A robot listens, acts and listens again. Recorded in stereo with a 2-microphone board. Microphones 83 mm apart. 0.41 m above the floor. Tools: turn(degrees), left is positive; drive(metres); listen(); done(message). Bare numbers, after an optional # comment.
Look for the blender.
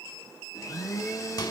# The blender: about 45° left or 135° left.
turn(45)
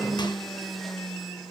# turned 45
done("Facing the blender, 2 to 4 m away.")